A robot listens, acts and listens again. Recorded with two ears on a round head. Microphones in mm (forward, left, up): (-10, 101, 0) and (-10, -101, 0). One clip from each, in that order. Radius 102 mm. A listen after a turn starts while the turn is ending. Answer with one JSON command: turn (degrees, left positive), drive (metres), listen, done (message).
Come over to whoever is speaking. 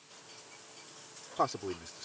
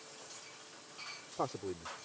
{"turn": 45}
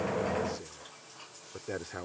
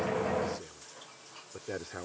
{"drive": 1.0}
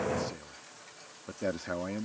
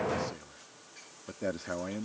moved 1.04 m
{"drive": 1.0}
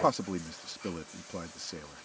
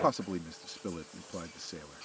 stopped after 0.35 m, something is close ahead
{"turn": 10}
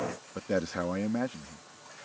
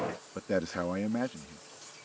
{"done": "I am next to the man speaking."}